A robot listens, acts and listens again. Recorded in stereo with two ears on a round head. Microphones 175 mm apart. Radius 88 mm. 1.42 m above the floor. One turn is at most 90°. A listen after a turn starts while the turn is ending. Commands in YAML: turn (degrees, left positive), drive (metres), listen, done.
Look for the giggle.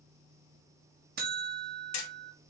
listen: true
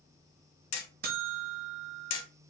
listen: true
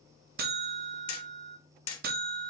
done: "I can't make out a giggle, only hammering and a buzzer."